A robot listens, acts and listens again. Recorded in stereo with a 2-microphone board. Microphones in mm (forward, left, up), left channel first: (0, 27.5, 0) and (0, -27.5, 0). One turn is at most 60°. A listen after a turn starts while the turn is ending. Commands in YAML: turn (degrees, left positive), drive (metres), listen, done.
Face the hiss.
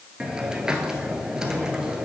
turn: -30
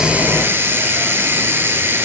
turn: -60
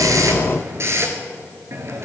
turn: -50
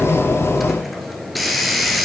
done: "Found it: a hiss, straight ahead, 1 to 2 m away."